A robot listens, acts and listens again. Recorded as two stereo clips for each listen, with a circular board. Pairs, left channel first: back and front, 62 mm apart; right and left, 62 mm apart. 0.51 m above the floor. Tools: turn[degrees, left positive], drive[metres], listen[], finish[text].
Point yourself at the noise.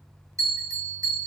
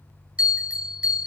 Thought: The bell: 20° left.
Action: turn[20]
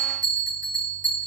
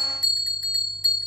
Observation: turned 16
Action: finish[Found it: a bell, straight ahead.]